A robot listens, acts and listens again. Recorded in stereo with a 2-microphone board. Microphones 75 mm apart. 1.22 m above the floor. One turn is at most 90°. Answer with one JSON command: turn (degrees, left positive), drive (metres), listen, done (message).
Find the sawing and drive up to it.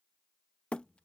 {"listen": true}
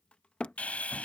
{"turn": 20}
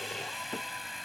{"drive": 1.0}
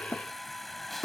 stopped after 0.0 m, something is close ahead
{"done": "Something is in my way. I am facing the sawing but have not reached it."}